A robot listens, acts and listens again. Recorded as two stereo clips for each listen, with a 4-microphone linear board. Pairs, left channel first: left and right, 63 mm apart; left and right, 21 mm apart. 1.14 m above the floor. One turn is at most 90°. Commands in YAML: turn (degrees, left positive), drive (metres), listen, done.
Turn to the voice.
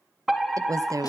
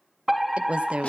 turn: -65
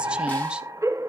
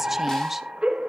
listen: true
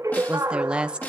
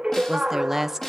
turn: -15
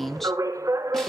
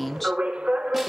done: "Facing the woman speaking, 1 to 2 m away."